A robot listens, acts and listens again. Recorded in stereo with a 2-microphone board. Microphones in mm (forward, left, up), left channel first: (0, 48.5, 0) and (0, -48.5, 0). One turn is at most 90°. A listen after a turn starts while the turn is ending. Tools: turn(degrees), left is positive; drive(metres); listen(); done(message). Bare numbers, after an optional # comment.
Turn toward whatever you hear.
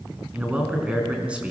turn(-30)
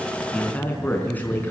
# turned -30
# So it is at 20° left.
turn(20)
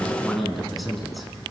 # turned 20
done("Found it: a man speaking, straight ahead, over 4 m away.")